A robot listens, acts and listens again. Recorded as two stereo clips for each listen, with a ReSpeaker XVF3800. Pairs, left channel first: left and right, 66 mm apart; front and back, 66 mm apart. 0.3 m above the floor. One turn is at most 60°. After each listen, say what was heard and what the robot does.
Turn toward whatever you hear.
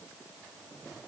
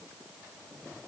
Keep listening.
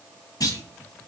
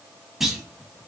The clunk: 95° left. Turn 60° left.
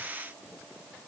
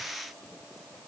Nothing new. It was at 35° left. Turn 35° left.
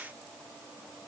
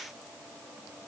I heard a clunk from this way, but can't make it out now.